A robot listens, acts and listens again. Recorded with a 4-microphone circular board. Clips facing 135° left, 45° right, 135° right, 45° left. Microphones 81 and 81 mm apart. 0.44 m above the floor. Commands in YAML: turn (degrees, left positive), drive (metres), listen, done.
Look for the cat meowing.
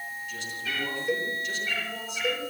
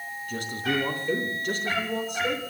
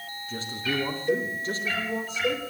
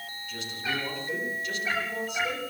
turn: -20
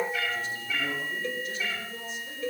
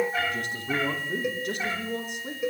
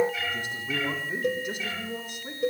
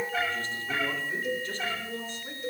done: "Facing the cat meowing."